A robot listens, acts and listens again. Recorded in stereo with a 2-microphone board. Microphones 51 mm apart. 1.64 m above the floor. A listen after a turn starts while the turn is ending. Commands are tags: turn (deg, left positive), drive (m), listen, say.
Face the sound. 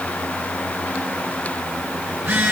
<turn deg="-45"/>
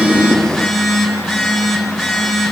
<say>Found it: a phone buzzing, straight ahead, over 4 m away.</say>